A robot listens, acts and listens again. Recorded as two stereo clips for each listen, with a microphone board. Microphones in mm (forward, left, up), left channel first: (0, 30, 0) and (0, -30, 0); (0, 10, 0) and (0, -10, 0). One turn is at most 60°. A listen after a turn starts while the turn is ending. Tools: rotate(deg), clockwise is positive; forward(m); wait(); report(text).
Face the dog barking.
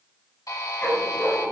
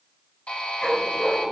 rotate(-30)
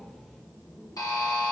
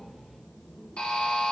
wait()
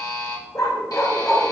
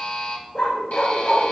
rotate(-60)
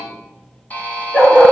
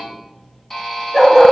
rotate(-25)
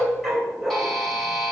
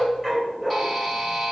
report("Facing the dog barking, 2 to 4 m away.")